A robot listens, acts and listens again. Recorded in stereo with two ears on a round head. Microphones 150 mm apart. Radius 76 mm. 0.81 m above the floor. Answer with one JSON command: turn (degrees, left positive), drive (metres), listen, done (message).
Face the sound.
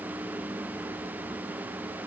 {"listen": true}
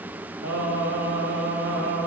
{"turn": -90}
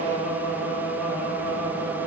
{"turn": 15}
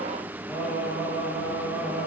{"done": "Facing the singing, 2 to 4 m away."}